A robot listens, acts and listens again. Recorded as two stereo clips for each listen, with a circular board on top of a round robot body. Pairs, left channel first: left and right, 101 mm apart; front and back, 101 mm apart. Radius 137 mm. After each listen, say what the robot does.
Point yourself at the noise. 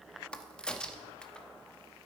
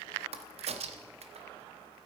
Turn 170° left.
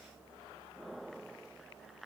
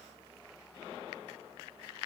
Facing where the crack came from. I can't hear it now.